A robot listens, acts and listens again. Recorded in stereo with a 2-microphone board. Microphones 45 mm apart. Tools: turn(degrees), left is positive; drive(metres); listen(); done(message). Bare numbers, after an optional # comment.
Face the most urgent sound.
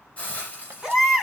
turn(-30)
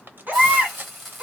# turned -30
# So it is at 140° right.
turn(-140)
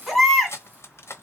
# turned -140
done("Found it: a baby crying, straight ahead.")